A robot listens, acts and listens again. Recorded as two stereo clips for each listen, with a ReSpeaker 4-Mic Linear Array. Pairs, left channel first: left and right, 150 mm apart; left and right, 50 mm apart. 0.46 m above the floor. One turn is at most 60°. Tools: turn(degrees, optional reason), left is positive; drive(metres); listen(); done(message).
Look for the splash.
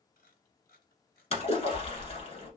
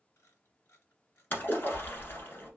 turn(degrees=45, reason="The splash: about 45° left or 135° left.")
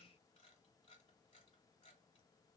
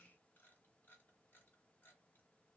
listen()
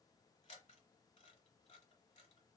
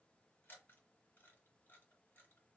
done("I heard a splash, but can't make it out now. It was about straight ahead or 90° left.")